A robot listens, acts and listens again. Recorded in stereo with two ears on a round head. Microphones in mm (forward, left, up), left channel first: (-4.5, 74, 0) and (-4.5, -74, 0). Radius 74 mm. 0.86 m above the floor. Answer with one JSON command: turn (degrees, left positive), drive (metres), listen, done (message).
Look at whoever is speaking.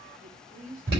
{"turn": -50}
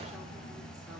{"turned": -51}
{"listen": true}
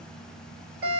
{"listen": true}
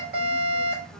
{"done": "I heard a woman speaking, but can't make it out now. It was about 5° left or 80° right."}